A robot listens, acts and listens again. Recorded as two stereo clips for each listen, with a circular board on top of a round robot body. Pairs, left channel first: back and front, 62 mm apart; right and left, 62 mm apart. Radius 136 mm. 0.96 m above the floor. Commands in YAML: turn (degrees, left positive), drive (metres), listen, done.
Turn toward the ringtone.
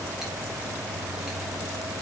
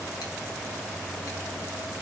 listen: true
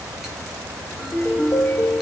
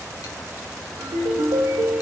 turn: 120
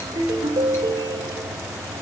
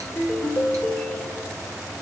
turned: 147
turn: -30
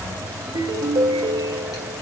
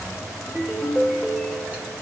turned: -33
done: "Found it: a ringtone, straight ahead, 2 to 4 m away."